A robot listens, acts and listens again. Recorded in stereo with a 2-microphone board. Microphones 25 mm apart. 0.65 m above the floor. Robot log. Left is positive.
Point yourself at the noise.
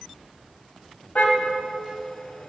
note: The car horn: about 70° left or 110° left.
cmd yaw +70
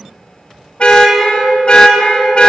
note: So it is at 45° left.
cmd yaw +45
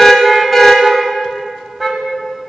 end: Facing the car horn, 2 to 4 m away.